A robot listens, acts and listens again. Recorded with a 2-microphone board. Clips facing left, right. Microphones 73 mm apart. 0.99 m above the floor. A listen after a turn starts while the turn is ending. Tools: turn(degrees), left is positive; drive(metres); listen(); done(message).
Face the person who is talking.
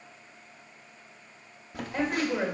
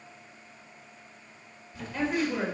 turn(degrees=20)
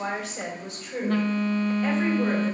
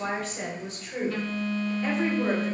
done("Facing the woman speaking, 2 to 4 m away.")